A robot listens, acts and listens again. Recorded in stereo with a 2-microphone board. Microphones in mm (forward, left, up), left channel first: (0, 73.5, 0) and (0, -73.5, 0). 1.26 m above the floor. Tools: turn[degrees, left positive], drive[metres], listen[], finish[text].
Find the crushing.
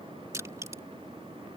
Thought: The crushing: about 20° right or 160° right.
Action: turn[-20]
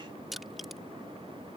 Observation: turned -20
Action: finish[Found it: crushing, straight ahead.]